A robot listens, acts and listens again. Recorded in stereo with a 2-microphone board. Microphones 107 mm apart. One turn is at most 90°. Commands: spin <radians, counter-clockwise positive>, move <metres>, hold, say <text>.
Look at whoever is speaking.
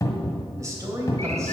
spin -0.52
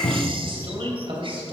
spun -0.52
spin -1.57
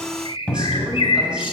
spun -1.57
spin -0.44
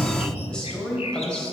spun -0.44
spin 0.17
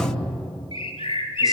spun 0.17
hold
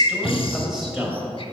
say Facing the man speaking, 2 to 4 m away.